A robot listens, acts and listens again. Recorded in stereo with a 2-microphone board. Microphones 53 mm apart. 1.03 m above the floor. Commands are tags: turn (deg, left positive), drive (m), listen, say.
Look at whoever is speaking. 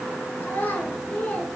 <turn deg="30"/>
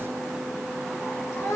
<turn deg="120"/>
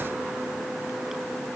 <listen/>
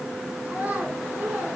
<turn deg="-25"/>
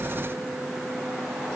<listen/>
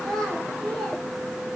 <turn deg="10"/>
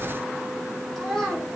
<say>Found it: a child speaking, straight ahead.</say>